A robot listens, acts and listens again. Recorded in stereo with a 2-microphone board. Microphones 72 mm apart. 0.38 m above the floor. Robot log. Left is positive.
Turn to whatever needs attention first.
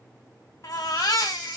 note: The baby crying: about 60° left or 120° left.
cmd yaw +60
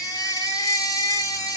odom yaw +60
note: So it is at 55° left.
cmd yaw +55
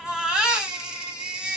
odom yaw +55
note: The baby crying is now 15° right.
cmd yaw -15
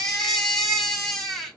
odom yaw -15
end: Found it: a baby crying, straight ahead.